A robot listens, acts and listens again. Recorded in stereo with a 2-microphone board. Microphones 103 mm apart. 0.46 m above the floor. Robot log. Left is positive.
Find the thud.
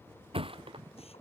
note: The thud: about 60° right or 120° right.
cmd yaw -60
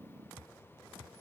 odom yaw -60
cmd idle
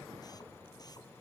end: I heard a thud, but can't make it out now. It was about straight ahead or 60° right.